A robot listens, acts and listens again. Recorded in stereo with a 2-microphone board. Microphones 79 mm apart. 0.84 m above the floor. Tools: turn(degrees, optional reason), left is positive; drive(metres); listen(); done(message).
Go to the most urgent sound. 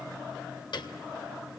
listen()
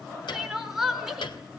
turn(degrees=-30)
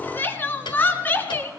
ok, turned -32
turn(degrees=25, reason="So it is at 25° left.")
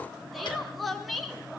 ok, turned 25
drive(metres=1.0)
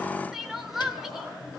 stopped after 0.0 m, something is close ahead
done("Something is in my way. I am facing the crying but have not reached it.")